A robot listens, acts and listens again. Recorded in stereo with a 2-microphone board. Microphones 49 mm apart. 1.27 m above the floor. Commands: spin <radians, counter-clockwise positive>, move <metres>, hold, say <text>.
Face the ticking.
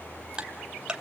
spin -0.35
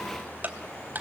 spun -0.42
spin -2.36
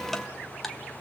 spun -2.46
say Facing the ticking, 1 to 2 m away.